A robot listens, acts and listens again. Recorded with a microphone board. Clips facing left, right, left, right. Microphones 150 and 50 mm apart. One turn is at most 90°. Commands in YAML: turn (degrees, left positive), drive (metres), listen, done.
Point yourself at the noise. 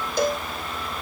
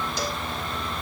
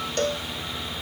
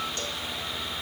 turn: 50
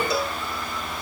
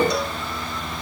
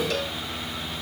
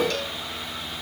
done: "Found it: a cowbell, straight ahead."